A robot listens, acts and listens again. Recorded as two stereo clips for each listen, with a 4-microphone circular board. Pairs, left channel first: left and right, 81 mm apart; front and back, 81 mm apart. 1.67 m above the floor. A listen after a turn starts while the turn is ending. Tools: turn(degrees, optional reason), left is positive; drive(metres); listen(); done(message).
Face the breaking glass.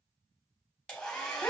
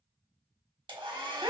listen()
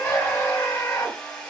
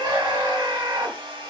listen()
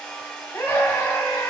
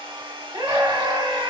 done("I can't make out breaking glass, only a scream and a hair dryer.")